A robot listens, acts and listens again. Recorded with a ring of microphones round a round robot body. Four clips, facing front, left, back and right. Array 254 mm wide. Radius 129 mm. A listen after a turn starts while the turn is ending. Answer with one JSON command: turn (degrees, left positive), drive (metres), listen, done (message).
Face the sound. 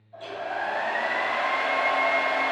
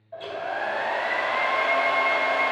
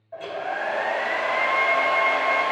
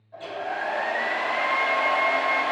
{"turn": 145}
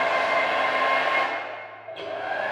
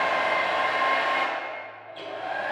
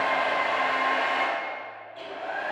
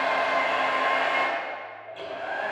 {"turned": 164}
{"turn": -15}
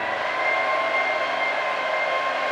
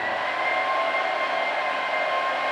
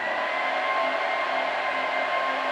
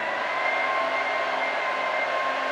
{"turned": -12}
{"done": "Facing the hair dryer."}